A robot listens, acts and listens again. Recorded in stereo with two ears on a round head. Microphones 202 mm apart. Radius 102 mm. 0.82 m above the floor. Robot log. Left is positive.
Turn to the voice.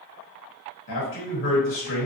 note: The man speaking: about 55° left or 125° left.
cmd yaw +55
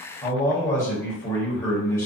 note: So it is at 15° left.
cmd yaw +15
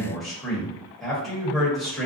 end: Facing the man speaking, 1 to 2 m away.